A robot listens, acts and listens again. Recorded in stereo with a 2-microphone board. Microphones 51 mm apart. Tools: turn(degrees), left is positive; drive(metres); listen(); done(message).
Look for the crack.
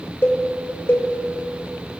listen()
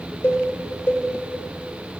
listen()
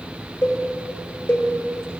done("I can't make out a crack, only a cowbell.")